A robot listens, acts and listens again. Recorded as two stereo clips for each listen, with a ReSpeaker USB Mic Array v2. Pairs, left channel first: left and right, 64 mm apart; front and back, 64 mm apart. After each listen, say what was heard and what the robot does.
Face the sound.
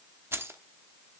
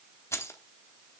The keys jangling: 40° right. Turn 40° right.
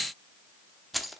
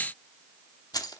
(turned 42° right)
Found it: keys jangling, straight ahead.